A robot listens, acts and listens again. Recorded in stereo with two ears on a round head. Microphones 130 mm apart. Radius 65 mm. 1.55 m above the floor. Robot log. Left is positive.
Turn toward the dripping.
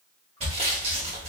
cmd idle
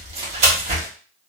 cmd idle
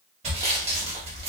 end: I can't make out dripping, only sawing.